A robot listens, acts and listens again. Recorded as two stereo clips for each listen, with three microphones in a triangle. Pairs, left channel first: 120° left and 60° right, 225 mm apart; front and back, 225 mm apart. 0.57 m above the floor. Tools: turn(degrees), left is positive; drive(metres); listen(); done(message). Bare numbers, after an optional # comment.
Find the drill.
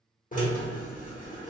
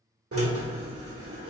# The drill: 170° left.
turn(170)
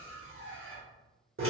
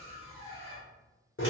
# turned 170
# The drill is now 35° right.
turn(-35)
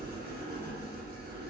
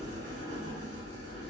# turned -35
# The drill is now 10° right.
turn(-10)
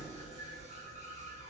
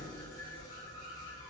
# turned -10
done("Facing the drill.")